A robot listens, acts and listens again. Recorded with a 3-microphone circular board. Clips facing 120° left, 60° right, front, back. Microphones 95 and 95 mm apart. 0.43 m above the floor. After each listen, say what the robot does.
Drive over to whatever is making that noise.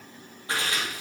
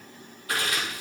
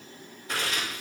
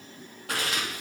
Turn 175° right.
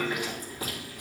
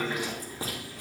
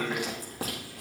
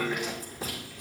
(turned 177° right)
Drive 1.0 m forward.
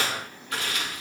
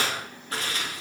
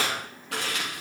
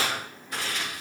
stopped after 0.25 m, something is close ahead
Something is in my way. I am facing the chewing but have not reached it.